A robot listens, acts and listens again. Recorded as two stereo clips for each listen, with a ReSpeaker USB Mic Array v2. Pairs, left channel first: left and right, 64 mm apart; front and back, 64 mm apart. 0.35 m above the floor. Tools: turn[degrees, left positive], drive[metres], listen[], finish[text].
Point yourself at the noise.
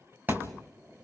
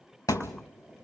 Thought: The thud: 30° right.
Action: turn[-30]
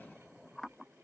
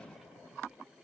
Action: finish[Facing where the thud came from. I can't hear it now.]